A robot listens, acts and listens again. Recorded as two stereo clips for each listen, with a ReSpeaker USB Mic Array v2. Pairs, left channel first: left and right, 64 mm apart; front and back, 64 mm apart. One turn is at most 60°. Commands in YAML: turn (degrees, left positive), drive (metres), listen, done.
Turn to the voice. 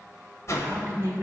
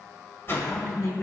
turn: -45
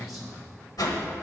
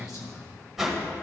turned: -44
done: "Facing the man speaking."